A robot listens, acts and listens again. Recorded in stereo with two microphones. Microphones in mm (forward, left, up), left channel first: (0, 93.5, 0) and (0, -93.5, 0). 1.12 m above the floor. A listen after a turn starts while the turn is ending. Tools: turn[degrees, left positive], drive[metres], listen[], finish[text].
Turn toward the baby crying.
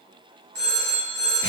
Action: listen[]
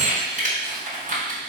Action: listen[]
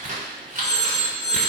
Action: finish[I can't make out a baby crying to turn to.]